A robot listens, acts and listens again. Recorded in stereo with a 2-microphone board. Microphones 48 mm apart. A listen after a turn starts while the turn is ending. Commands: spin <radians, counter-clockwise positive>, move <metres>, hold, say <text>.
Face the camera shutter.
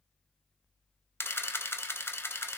spin 1.05
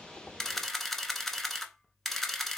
say Found it: a camera shutter, straight ahead.